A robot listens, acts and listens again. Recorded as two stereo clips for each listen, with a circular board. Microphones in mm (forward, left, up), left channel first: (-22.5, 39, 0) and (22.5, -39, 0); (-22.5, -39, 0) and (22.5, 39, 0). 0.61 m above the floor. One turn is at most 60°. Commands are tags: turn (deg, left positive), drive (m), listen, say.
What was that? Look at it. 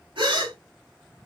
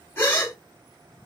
<turn deg="-60"/>
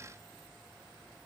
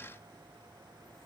<say>Facing where the gasp came from. I can't hear it now.</say>